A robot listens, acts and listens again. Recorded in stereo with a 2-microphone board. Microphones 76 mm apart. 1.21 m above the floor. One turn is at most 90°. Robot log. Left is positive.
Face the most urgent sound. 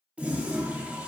cmd idle
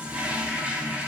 cmd idle
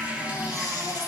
note: The baby crying: about 55° left or 125° left.
cmd yaw +55
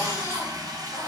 note: So it is at 50° left.
cmd yaw +50
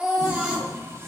note: The baby crying is now 15° right.
cmd yaw -15
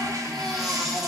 end: Found it: a baby crying, straight ahead, 1 to 2 m away.